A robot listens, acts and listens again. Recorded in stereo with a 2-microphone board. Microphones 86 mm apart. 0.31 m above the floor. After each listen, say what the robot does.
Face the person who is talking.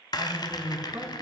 Turn 65° right.
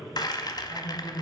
Turn 35° right.
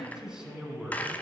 Turn 10° right.
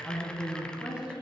Turn 10° right.
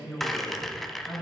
Turn 10° right.
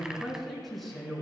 Facing the man speaking.